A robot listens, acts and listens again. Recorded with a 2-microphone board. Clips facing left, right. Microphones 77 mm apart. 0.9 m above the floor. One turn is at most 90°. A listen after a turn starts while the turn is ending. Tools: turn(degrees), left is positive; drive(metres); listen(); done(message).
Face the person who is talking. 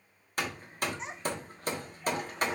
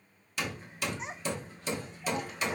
turn(degrees=30)
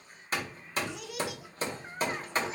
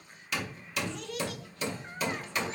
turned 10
turn(degrees=30)
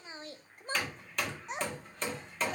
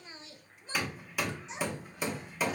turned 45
turn(degrees=90)
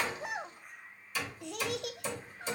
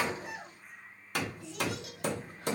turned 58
turn(degrees=70)
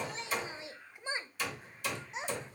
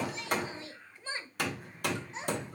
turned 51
turn(degrees=20)
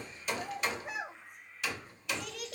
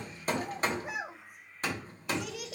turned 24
done("Facing the child speaking, under 1 m away.")